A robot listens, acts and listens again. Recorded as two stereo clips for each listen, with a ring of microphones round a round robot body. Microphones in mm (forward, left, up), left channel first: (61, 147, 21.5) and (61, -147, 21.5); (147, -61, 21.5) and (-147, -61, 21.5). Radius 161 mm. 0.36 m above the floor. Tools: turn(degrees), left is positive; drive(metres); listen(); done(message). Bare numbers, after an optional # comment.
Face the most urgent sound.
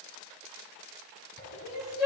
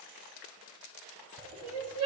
# The crying: 175° right.
turn(-175)
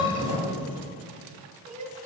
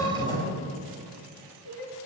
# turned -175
# The crying is now 35° right.
turn(-35)
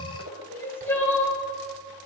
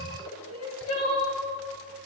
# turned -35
# The crying is now 10° left.
turn(10)
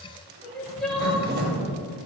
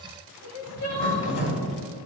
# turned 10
done("Facing the crying.")